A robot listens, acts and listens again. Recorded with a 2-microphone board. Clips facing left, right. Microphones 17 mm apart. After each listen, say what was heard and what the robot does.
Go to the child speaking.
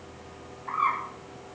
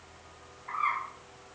Keep listening.
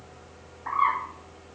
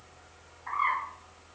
Keep listening.
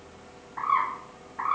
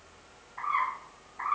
I can't make out a child speaking to turn to.